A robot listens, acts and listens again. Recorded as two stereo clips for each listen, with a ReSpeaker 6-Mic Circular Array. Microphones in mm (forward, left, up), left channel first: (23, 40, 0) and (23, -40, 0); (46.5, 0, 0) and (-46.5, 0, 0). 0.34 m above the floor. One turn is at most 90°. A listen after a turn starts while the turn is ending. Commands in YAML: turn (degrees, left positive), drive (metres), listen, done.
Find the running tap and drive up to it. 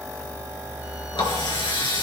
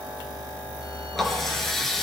turn: 85
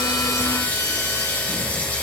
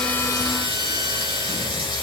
turn: 20
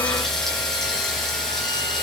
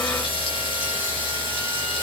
drive: 1.0
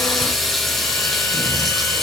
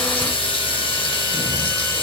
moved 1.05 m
drive: 1.0
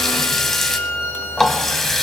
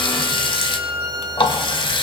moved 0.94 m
drive: 1.0
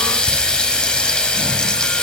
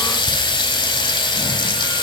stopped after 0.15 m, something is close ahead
turn: 10
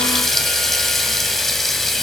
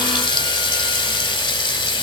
done: "Arrived at the running tap, straight ahead."